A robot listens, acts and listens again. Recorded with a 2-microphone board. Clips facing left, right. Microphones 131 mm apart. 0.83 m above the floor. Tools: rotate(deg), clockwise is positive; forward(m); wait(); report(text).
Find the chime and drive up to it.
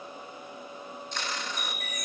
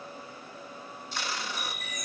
rotate(-50)
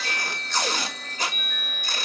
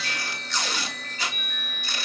forward(1.0)
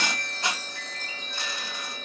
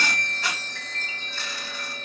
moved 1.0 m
forward(1.0)
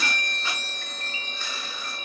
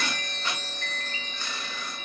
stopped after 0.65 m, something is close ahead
rotate(-15)
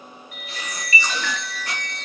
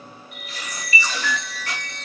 report("Arrived at the chime, straight ahead.")